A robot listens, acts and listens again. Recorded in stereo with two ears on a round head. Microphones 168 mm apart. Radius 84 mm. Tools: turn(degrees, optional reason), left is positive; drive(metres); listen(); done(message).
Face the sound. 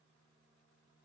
listen()
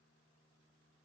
listen()
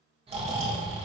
turn(degrees=-30, reason="The snoring: about 30° right or 150° right.")
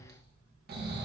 turn(degrees=-110, reason="So it is at 110° right.")
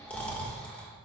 turn(degrees=10, reason="The snoring is now 10° left.")
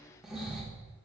done("Facing the snoring, 1 to 2 m away.")